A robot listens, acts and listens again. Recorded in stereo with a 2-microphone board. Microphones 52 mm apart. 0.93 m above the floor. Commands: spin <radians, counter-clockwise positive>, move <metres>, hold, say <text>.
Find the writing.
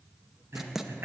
spin -0.52
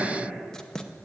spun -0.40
spin 0.26
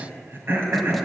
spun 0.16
spin 0.17
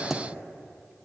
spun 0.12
say Facing the writing.